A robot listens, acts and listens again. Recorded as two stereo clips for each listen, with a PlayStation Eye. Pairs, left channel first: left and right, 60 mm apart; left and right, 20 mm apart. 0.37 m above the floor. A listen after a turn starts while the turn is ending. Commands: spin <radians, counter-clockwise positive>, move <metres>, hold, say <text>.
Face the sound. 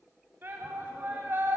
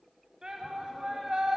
spin -0.70
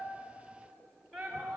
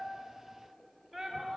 say Found it: a shout, straight ahead.